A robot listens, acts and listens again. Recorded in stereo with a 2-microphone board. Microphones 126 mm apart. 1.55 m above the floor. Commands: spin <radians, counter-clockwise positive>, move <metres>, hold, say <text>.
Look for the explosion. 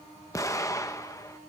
spin 0.44
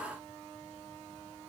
hold
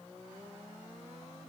say I heard an explosion, but can't make it out now. It was about straight ahead or 130° left.